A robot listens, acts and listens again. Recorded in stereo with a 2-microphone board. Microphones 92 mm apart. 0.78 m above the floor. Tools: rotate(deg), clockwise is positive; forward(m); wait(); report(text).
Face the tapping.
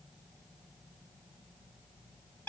wait()
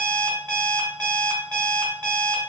wait()
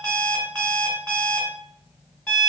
report("I can't make out tapping to turn to.")